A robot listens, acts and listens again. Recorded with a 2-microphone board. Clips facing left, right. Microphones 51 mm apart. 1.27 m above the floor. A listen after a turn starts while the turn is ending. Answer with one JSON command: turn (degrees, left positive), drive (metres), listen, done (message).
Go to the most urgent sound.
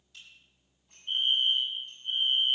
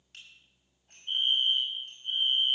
{"turn": -30}
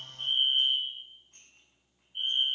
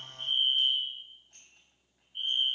{"turn": 15}
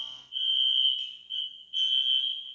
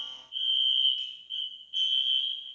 {"drive": 1.0}
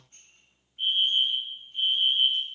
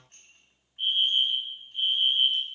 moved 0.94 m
{"drive": 1.0}
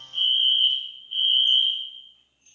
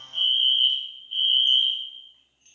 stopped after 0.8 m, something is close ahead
{"done": "I am next to the fire alarm."}